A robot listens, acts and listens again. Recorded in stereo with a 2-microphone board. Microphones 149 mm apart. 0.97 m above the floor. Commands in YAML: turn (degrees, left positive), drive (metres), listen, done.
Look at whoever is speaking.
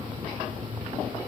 listen: true
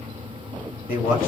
turn: 70
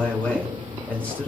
turn: 10
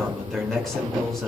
done: "Facing the man speaking, 2 to 4 m away."